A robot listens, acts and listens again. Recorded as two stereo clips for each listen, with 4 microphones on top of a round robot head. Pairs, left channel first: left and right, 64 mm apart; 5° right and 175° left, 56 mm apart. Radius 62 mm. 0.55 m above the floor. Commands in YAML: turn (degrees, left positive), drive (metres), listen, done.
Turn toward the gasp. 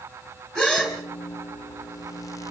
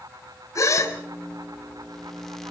turn: 15
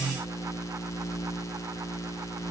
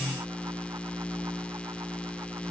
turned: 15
done: "I heard a gasp from this way, but can't make it out now."